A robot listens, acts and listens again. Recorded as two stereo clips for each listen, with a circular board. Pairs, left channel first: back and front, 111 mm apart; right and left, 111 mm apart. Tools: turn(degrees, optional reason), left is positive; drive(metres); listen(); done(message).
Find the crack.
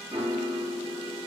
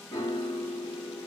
listen()
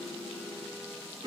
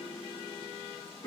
listen()
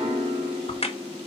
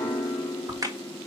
turn(degrees=150, reason="The crack: 150° left.")
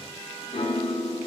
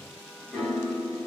done("Facing where the crack came from. I can't hear it now.")